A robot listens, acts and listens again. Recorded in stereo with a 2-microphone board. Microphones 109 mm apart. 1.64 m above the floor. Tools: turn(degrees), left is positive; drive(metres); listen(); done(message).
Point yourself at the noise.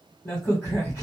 turn(degrees=25)
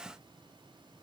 listen()
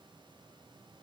done("I heard a crack, but can't make it out now. It was about straight ahead or 130° left.")